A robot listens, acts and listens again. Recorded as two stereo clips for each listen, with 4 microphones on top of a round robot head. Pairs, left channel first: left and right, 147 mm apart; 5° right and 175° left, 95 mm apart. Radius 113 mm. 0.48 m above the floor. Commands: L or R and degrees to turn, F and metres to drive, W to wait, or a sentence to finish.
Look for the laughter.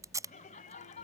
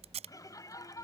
L50
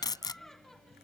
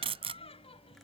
Found it: laughter, straight ahead.